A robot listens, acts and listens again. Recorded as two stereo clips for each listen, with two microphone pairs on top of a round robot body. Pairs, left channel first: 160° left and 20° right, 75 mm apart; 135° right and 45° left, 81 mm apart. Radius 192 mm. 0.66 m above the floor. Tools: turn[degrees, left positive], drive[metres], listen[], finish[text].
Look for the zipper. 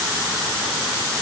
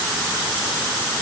Action: listen[]
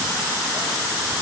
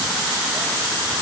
Action: listen[]
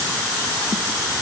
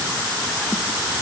Action: finish[I can't make out a zipper.]